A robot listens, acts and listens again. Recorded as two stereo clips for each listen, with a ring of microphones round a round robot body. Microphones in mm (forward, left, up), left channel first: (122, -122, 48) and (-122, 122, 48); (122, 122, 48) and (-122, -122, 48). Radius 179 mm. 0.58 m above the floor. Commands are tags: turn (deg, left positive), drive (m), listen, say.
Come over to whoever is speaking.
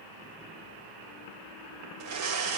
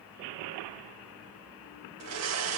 <listen/>
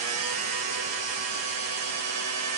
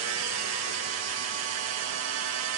<listen/>
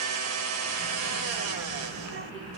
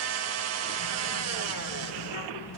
<turn deg="75"/>
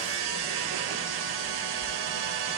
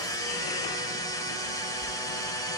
<turn deg="25"/>
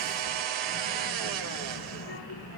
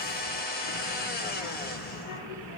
<turn deg="10"/>
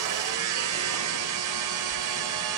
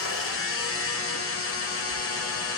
<drive m="1.0"/>
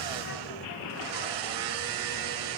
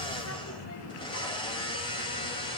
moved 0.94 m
<drive m="1.0"/>
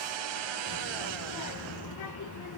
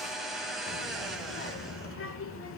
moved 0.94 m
<turn deg="-10"/>
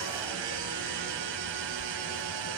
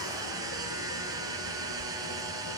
<drive m="1.0"/>
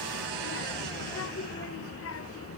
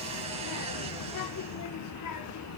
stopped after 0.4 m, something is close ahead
<say>Arrived at the child speaking, straight ahead.</say>